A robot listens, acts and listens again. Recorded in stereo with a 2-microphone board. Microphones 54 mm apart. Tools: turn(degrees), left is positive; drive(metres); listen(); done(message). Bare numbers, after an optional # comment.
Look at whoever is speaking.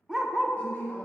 # The woman speaking: about 30° left or 150° left.
turn(30)
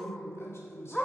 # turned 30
# So it is at 120° left.
turn(120)
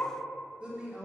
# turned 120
# The woman speaking is now 20° right.
turn(-20)
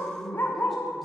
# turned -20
done("Found it: a woman speaking, straight ahead.")